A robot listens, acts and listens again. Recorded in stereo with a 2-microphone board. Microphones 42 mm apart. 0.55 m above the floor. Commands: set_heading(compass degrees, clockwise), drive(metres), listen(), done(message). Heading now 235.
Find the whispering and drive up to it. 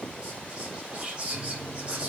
set_heading(260)
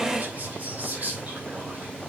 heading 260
set_heading(30)
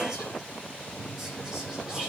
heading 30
listen()
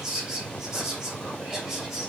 set_heading(45)
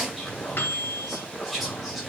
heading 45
drive(1.0)
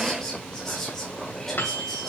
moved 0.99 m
set_heading(35)
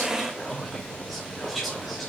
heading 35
drive(1.0)
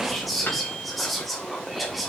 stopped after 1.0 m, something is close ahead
done("Arrived at the whispering, straight ahead.")